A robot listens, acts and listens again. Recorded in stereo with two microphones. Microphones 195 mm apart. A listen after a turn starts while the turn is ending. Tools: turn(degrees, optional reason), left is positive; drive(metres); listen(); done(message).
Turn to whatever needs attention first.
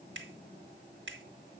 listen()
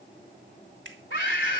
turn(degrees=75, reason="The scream: about 75° left or 105° left.")
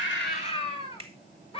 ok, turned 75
turn(degrees=30, reason="So it is at 30° left.")
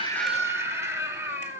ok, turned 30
turn(degrees=-15, reason="The scream is now 15° right.")
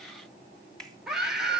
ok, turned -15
done("Found it: a scream, straight ahead.")